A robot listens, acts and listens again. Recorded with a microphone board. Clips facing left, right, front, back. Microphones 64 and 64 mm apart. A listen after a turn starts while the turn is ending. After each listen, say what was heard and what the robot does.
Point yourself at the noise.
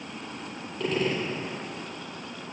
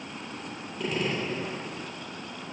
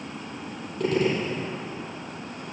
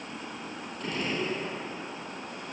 The gunshot: 10° right. Turn 10° right.
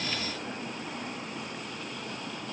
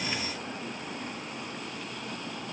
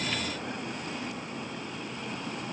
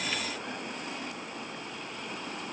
Facing where the gunshot came from. I can't hear it now.